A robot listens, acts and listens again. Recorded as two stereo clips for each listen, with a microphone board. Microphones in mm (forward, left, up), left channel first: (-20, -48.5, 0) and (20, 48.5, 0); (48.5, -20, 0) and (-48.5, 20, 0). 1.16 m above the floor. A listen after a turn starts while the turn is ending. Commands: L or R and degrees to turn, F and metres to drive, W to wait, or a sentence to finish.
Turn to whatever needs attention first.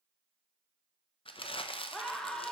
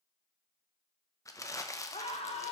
R30
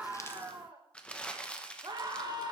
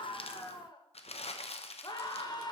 L20
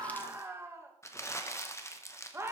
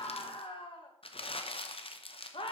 Facing the scream, 1 to 2 m away.